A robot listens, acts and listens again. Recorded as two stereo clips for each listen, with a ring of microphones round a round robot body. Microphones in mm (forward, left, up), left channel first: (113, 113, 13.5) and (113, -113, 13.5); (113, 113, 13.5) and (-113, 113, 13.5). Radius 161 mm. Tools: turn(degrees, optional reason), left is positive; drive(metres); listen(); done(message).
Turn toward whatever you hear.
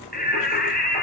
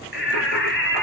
turn(degrees=40, reason="The singing: 40° left.")
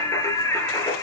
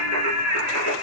turn(degrees=15, reason="The singing is now 15° left.")
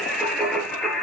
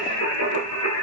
done("Found it: singing, straight ahead, over 4 m away.")